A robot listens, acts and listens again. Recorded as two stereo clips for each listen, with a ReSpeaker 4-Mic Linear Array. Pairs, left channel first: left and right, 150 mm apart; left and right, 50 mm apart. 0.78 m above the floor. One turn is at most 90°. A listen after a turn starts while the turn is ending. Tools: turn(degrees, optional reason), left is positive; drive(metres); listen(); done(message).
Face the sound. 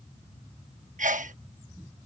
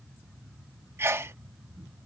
turn(degrees=-55, reason="The sneeze: about 55° right or 125° right.")
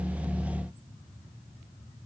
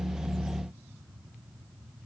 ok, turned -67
listen()
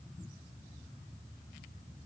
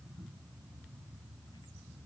done("I heard a sneeze, but can't make it out now. It was about 10° left or 55° right.")